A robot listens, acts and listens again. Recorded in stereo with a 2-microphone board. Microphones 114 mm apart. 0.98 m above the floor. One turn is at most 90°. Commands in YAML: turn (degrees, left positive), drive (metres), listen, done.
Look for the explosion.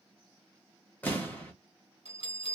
turn: 15
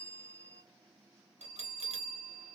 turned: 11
listen: true
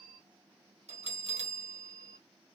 done: "I heard an explosion, but can't make it out now. It was about 5° left or 155° left."